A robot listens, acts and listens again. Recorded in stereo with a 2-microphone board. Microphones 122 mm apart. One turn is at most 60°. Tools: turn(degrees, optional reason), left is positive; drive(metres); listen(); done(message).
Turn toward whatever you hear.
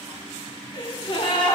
turn(degrees=45, reason="The gasp: about 45° left or 135° left.")
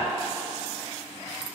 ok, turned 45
listen()
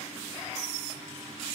done("I heard a gasp, but can't make it out now. It was about straight ahead or 90° left.")